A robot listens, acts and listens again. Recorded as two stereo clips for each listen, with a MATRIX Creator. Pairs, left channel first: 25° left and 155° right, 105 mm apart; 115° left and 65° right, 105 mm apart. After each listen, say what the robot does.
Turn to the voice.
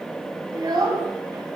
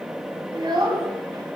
Turn 110° right.
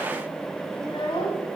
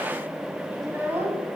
Facing the child speaking, 1 to 2 m away.